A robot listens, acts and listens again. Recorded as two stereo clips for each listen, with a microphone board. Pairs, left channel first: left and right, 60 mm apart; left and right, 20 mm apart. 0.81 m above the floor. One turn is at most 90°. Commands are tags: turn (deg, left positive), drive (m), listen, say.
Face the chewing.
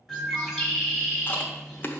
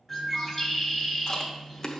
<turn deg="30"/>
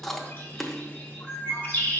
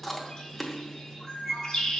<say>Found it: chewing, straight ahead.</say>